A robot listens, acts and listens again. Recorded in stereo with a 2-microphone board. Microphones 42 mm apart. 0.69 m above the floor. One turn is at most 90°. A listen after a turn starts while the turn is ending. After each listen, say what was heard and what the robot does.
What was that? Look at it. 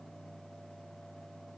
Keep listening.
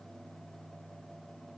Keep listening.
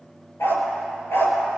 Turn 90° left.
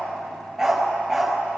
Found it: a dog barking, straight ahead.